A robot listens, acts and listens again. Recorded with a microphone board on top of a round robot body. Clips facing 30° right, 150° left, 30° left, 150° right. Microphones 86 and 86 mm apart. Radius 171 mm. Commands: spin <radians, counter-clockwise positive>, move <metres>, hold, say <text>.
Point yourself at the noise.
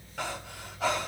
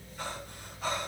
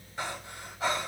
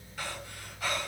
spin -0.61
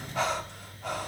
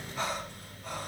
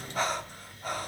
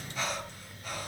spin -0.35
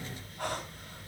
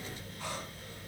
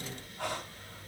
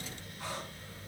say Found it: breathing, straight ahead.